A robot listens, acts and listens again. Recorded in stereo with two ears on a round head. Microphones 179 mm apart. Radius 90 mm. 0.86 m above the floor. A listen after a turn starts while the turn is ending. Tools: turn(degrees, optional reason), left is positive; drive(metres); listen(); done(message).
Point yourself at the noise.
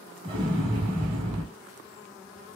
turn(degrees=-25, reason="The explosion: about 25° right or 155° right.")
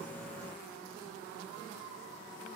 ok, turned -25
listen()
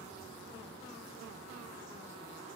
done("I heard an explosion, but can't make it out now. It was about straight ahead or 130° right.")